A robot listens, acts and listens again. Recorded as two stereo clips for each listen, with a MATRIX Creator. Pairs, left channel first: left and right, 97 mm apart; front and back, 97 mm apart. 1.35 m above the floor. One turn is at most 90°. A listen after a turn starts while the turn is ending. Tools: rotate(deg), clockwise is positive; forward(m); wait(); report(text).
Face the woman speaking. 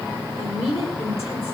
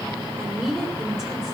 rotate(-90)
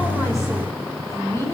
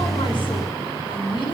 rotate(-30)
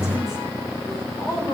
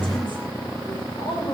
rotate(-35)
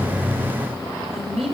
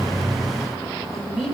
report("Found it: a woman speaking, straight ahead.")